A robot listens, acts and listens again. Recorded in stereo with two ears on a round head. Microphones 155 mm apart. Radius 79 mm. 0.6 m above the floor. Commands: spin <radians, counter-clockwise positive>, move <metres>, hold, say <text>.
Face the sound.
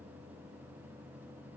hold
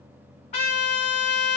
spin 0.70
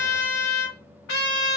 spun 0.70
spin 1.66
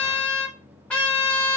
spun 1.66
say Found it: a trumpet, straight ahead, 1 to 2 m away.